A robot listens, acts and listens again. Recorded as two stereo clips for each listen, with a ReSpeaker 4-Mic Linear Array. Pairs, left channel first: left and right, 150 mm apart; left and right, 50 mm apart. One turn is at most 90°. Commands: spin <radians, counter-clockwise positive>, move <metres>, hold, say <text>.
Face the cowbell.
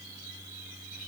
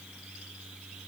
hold
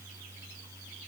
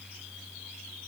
hold
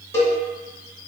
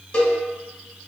spin 0.26
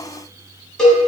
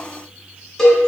say Facing the cowbell, under 1 m away.